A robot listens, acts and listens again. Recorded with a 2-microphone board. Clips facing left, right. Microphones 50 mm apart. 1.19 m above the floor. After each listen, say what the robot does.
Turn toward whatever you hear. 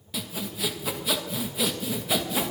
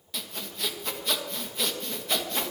Turn 30° left.
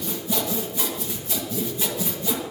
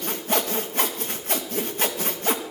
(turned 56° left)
Turn 50° right.
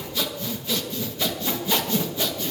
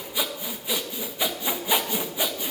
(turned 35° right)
Turn 15° right.
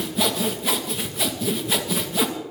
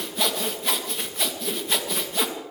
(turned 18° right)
Found it: sawing, straight ahead.